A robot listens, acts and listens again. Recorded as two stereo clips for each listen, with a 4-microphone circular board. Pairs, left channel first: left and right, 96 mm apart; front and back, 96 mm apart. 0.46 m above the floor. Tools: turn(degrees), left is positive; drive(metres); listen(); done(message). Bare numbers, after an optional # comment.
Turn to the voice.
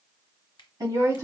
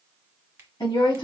# The woman speaking: 35° right.
turn(-35)
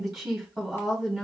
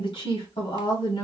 done("Found it: a woman speaking, straight ahead, 2 to 4 m away.")